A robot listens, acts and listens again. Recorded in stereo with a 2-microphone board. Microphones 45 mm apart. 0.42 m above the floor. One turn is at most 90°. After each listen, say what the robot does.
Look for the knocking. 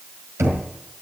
Turn 90° right.
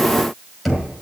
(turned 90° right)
Facing the knocking, over 4 m away.